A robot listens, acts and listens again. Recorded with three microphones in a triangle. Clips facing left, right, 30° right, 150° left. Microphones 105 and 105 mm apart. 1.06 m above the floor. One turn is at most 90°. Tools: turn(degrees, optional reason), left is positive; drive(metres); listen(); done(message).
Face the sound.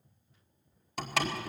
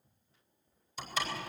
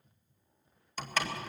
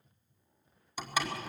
turn(degrees=70, reason="The door slam: 70° left.")
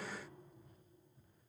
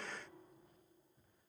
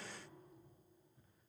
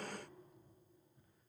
done("I heard a door slam from this way, but can't make it out now.")